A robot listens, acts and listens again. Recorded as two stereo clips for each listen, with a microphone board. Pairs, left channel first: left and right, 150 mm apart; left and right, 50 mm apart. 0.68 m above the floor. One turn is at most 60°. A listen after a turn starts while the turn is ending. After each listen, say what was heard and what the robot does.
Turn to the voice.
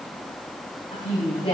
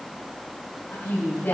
The woman speaking: about 35° left or 145° left. Turn 35° left.
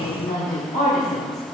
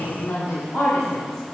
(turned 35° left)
So it is at 120° left. Turn 60° left.
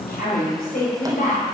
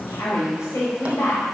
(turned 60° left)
The woman speaking is now 75° left. Turn 60° left.
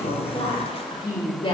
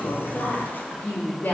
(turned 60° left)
The woman speaking is now 35° left. Turn 35° left.
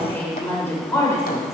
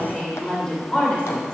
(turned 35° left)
The woman speaking is now 20° left. Turn 20° left.
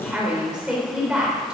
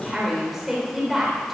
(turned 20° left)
Found it: a woman speaking, straight ahead.